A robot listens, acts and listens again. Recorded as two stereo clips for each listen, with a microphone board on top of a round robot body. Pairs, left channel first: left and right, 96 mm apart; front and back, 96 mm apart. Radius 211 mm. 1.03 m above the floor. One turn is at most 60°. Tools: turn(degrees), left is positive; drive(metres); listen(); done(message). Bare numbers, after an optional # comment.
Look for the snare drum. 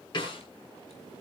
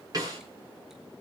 # The snare drum: 130° left.
turn(60)
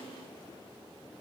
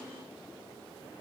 # Nothing new. It was at 70° left.
turn(60)
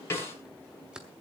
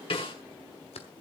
# The snare drum is now 25° left.
turn(25)
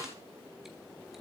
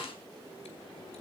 # The snare drum is now 30° left.
turn(30)
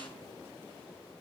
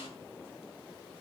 listen()
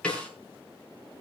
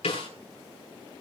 # The snare drum is now 10° left.
turn(10)
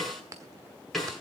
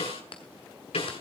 done("Found it: a snare drum, straight ahead.")